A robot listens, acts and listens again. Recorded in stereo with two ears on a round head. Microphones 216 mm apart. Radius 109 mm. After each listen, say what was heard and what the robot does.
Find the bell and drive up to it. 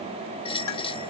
The bell: about 25° left or 155° left. Turn 25° left.
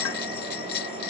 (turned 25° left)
So it is at 130° left. Turn 130° left.
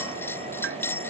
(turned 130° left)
The bell is now 10° left. Turn 10° left.
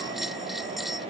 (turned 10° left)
Drive 1.0 m forward.
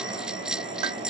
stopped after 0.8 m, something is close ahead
Something is in my way. I am facing the bell but have not reached it.